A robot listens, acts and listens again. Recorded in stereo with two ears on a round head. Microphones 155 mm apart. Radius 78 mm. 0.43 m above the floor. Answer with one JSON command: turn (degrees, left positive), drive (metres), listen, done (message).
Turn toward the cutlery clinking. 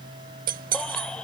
{"turn": -55}
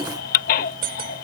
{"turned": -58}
{"turn": -60}
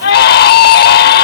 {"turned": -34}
{"turn": -25}
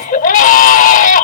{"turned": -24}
{"listen": true}
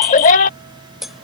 {"done": "Facing the cutlery clinking."}